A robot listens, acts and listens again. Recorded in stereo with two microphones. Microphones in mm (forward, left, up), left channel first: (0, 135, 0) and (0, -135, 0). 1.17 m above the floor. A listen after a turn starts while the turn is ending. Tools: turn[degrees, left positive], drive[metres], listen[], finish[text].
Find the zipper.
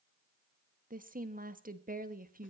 Action: listen[]
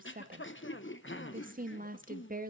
Action: listen[]
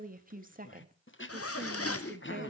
Thought: The zipper: about 60° left or 120° left.
Action: turn[60]
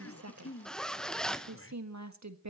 Action: finish[Facing the zipper, under 1 m away.]